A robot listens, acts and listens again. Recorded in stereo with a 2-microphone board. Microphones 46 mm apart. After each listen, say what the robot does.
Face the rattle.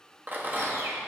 Turn 40° right.
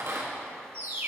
Turn 95° right.
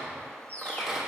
Turn 10° right.
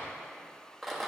Found it: a rattle, straight ahead, 1 to 2 m away.